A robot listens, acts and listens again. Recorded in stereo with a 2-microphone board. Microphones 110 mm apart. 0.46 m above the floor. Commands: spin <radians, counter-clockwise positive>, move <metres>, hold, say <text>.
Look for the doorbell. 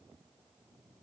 hold
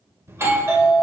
spin -0.44
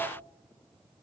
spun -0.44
hold
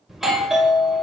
say Facing the doorbell, 2 to 4 m away.